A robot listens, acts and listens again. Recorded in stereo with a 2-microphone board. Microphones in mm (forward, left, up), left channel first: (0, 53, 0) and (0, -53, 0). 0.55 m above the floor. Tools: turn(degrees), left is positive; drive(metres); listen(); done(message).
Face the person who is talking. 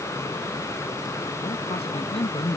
turn(degrees=70)
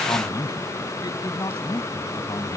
turn(degrees=35)
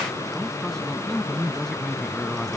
done("Found it: a man speaking, straight ahead.")